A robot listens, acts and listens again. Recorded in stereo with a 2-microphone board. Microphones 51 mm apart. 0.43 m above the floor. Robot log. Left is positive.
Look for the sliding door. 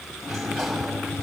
cmd yaw +30
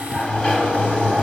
note: So it is at 155° left.
cmd yaw +155
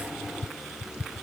note: The sliding door is now 20° right.
cmd yaw -20
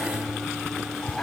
end: Found it: a sliding door, straight ahead.